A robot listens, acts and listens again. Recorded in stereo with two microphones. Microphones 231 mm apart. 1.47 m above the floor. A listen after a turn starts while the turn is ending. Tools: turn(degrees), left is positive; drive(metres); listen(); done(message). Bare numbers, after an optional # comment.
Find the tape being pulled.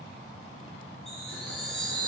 listen()
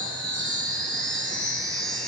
listen()
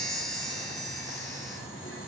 done("I can't make out tape being pulled, only boiling and a chime.")